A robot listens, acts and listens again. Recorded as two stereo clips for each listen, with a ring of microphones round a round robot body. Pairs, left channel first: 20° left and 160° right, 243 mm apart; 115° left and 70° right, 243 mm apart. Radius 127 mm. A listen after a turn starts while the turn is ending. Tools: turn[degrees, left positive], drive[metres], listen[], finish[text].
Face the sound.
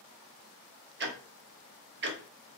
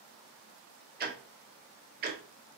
Thought: The ticking: 115° right.
Action: turn[-115]
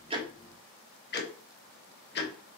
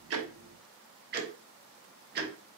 Thought: The ticking is now 20° right.
Action: turn[-20]
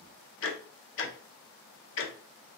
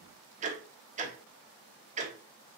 Thought: The ticking is now 10° right.
Action: turn[-10]
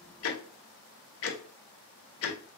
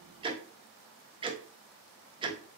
Action: finish[Found it: ticking, straight ahead.]